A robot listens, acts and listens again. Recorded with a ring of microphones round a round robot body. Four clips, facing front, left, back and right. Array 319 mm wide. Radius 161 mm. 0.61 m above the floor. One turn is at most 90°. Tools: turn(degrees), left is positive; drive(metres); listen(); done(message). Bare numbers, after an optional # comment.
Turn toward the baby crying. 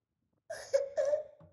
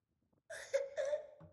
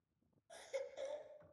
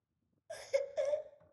# The baby crying: 20° right.
turn(-20)
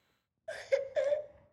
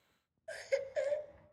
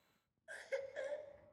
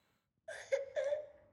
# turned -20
done("Found it: a baby crying, straight ahead.")